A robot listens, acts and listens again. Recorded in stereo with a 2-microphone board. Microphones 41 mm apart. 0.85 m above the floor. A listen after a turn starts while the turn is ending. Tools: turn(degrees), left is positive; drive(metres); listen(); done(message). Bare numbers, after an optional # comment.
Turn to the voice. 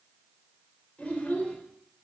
# The child speaking: about 35° left or 145° left.
turn(35)
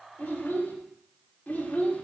# The child speaking: about 40° left or 140° left.
turn(40)
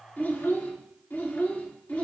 # The child speaking: about 40° left or 140° left.
turn(40)
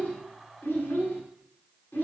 # So it is at 120° left.
turn(120)
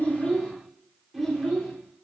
done("Found it: a child speaking, straight ahead, 1 to 2 m away.")